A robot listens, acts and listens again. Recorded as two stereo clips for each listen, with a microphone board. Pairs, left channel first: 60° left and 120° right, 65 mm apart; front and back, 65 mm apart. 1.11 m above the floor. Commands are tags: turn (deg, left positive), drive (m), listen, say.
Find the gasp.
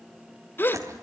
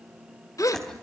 <turn deg="10"/>
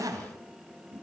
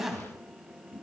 <say>I heard a gasp from this way, but can't make it out now.</say>